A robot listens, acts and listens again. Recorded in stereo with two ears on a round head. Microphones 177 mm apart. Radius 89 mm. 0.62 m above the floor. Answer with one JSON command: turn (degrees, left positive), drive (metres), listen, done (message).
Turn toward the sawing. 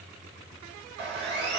{"turn": -60}
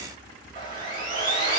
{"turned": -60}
{"turn": -30}
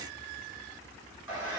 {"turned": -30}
{"done": "Found it: sawing, straight ahead, 1 to 2 m away."}